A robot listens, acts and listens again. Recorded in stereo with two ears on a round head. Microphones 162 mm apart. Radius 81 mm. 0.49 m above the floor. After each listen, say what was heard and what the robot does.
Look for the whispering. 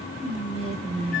The whispering: about 30° right or 150° right. Turn 30° right.
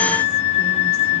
Keep listening.
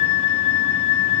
Keep listening.
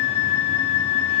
I heard whispering, but can't make it out now. It was about straight ahead or 120° right.